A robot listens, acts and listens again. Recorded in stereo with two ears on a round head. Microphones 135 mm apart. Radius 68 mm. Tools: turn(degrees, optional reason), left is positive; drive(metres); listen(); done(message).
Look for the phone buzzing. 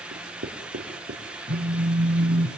turn(degrees=-45, reason="The phone buzzing: about 45° right or 135° right.")
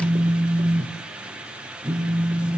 done("Found it: a phone buzzing, straight ahead, 2 to 4 m away.")